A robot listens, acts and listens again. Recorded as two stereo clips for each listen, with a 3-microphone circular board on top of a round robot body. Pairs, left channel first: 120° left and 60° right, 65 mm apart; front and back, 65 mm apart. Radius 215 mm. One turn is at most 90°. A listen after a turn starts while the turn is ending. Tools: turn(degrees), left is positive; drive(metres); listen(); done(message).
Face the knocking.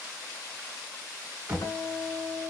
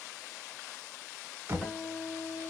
turn(degrees=-90)
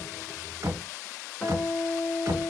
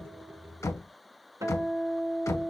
turn(degrees=-30)
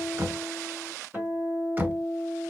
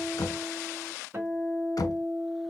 done("Facing the knocking, 1 to 2 m away.")